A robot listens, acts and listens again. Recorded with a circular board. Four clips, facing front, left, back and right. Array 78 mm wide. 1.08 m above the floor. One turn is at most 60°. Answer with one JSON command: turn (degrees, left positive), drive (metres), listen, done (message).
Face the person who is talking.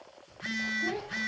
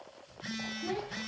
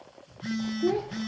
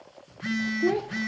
{"turn": -60}
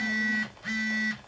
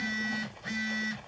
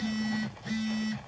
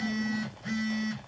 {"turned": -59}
{"turn": -35}
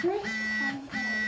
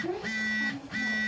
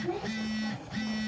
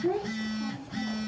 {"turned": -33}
{"done": "Found it: a child speaking, straight ahead, 1 to 2 m away."}